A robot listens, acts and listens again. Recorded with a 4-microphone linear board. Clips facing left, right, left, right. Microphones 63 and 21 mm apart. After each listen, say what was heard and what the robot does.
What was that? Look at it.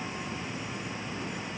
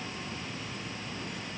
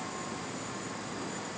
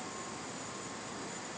Keep listening.
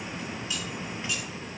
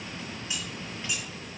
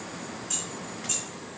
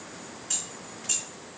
The keys jangling: about 20° right or 160° right. Turn 20° right.
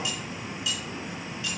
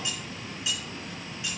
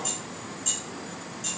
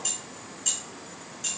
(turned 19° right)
The keys jangling: about 20° right or 160° right. Turn 20° right.
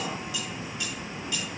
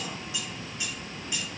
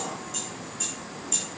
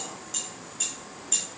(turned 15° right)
The keys jangling: about 20° right or 160° right. Turn 20° right.
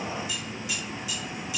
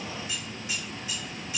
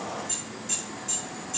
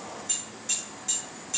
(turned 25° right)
So it is at 145° right. Turn 145° right.
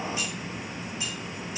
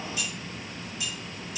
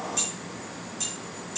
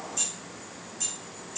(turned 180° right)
The keys jangling is now 35° left. Turn 35° left.
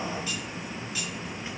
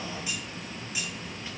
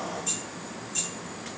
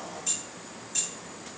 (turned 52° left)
The keys jangling is now 15° right. Turn 15° right.
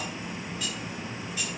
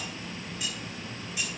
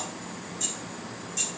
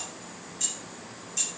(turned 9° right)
Found it: keys jangling, straight ahead, 2 to 4 m away.